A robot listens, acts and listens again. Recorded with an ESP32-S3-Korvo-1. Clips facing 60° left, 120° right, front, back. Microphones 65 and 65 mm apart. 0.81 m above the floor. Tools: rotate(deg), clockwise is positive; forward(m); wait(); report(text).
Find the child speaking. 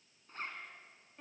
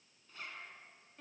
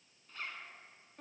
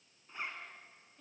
wait()
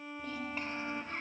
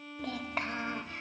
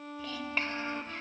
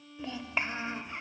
rotate(100)
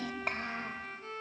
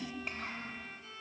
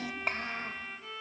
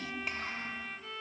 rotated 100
rotate(-45)
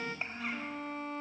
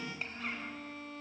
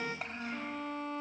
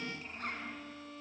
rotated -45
report("Found it: a child speaking, straight ahead.")